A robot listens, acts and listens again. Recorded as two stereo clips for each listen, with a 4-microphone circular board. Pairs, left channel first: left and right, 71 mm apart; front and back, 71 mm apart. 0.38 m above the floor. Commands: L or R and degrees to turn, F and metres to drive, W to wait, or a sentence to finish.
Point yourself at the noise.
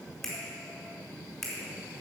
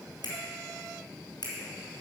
Found it: a finger snap, straight ahead.